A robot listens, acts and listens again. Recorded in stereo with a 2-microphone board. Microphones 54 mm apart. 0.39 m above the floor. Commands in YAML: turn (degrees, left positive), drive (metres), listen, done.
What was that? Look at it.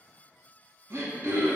turn: -50
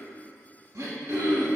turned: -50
turn: -80
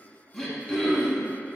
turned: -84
done: "Facing the throat clearing, under 1 m away."